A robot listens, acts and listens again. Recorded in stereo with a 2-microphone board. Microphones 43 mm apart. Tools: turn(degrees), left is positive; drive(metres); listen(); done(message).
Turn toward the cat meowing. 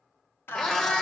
turn(degrees=15)
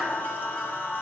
listen()
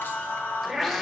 done("Facing the cat meowing.")